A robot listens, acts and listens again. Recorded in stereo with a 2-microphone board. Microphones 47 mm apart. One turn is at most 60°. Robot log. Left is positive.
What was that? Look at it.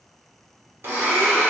note: The blender: about 60° right or 120° right.
cmd yaw -60
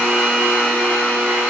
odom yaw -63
note: So it is at 45° right.
cmd yaw -45
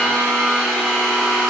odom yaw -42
end: Found it: a blender, straight ahead.